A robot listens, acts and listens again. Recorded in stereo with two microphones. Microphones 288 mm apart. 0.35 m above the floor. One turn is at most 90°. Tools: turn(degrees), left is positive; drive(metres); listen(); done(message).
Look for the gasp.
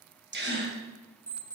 turn(degrees=-40)
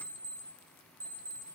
listen()
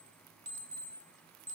done("I heard a gasp, but can't make it out now. It was about straight ahead or 100° right.")